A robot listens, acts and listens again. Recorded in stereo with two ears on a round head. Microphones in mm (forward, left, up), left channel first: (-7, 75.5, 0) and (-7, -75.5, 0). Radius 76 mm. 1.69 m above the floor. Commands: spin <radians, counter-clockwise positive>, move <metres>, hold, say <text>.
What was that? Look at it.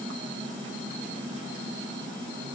hold
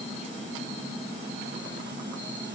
hold
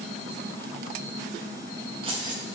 spin -0.44
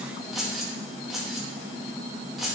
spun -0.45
say Facing the keys jangling, 1 to 2 m away.